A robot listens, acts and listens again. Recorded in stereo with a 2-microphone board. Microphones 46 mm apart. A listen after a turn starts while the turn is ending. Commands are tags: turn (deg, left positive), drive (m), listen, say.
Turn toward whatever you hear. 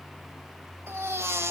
<turn deg="-90"/>
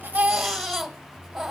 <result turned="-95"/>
<say>Found it: a baby crying, straight ahead, 1 to 2 m away.</say>